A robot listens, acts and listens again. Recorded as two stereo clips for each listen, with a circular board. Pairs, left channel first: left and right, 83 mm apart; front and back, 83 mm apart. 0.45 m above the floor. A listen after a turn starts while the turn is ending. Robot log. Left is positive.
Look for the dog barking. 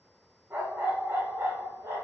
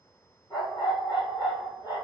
note: The dog barking: 35° right.
cmd yaw -35
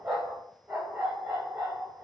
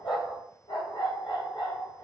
note: The dog barking is now 30° right.
cmd yaw -30
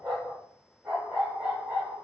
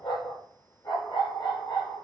note: The dog barking is now 25° right.
cmd yaw -25
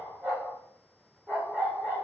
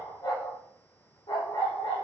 note: The dog barking is now 10° right.
cmd yaw -10
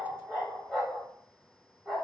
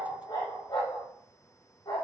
end: Facing the dog barking, over 4 m away.